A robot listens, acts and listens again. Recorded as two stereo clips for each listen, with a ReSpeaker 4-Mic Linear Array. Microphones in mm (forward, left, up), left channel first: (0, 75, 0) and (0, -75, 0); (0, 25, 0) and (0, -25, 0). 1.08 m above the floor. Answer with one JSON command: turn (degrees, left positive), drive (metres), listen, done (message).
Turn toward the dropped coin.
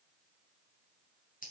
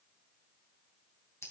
{"listen": true}
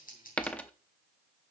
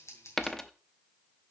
{"turn": 30}
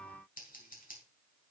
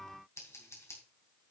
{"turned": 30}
{"listen": true}
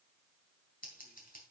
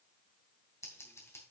{"done": "I heard a dropped coin, but can't make it out now. It was about 20° right or 140° left."}